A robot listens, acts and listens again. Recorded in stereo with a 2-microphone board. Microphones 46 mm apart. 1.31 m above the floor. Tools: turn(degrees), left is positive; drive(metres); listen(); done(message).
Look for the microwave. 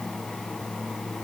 listen()
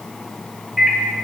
turn(degrees=-30)
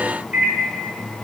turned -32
turn(degrees=-145)
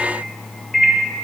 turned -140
done("Found it: a microwave, straight ahead, under 1 m away.")